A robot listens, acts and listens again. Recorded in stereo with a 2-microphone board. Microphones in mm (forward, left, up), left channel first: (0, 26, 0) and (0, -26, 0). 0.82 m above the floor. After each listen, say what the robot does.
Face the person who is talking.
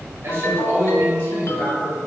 Turn 55° right.
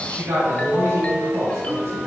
Turn 70° right.
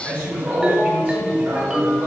Turn 35° right.
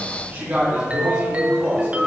Turn 35° right.
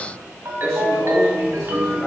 Keep listening.
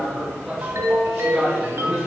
Facing the man speaking, 2 to 4 m away.